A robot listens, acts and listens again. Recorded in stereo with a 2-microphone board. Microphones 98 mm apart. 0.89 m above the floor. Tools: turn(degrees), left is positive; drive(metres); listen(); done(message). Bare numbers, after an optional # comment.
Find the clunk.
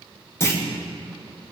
# The clunk: about 25° left or 155° left.
turn(25)
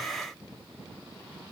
listen()
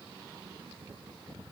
done("I heard a clunk, but can't make it out now. It was about straight ahead or 130° left.")